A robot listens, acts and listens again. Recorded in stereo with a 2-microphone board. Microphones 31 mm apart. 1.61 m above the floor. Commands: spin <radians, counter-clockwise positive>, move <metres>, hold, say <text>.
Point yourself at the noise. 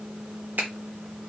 spin -1.13
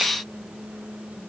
hold
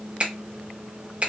spin -0.70
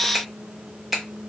say Facing the finger snap, 1 to 2 m away.